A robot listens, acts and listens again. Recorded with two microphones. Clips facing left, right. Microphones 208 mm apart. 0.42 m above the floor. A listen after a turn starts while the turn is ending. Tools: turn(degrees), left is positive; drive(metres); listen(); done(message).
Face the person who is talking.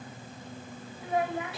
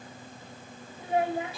turn(degrees=-30)
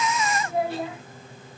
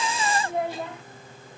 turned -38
done("Facing the child speaking, 1 to 2 m away.")